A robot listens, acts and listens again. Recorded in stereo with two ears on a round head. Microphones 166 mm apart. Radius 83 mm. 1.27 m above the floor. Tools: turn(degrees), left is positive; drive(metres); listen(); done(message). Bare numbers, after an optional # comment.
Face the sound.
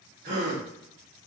# The gasp: about 60° right or 120° right.
turn(-60)
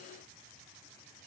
listen()
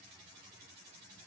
done("I heard a gasp, but can't make it out now. It was about straight ahead or 60° right.")